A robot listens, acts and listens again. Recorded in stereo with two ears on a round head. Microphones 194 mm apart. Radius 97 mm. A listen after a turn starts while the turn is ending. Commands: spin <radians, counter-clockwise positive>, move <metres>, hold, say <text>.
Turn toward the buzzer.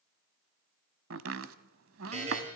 spin -0.52
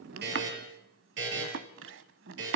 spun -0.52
spin -2.09
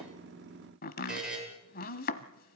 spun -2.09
say Found it: a buzzer, straight ahead, over 4 m away.